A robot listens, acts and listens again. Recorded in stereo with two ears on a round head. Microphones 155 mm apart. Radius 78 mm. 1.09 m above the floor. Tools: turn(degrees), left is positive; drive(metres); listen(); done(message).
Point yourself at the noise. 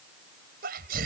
turn(degrees=-65)
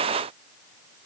listen()
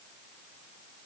done("I heard a sneeze, but can't make it out now. It was about straight ahead or 50° right.")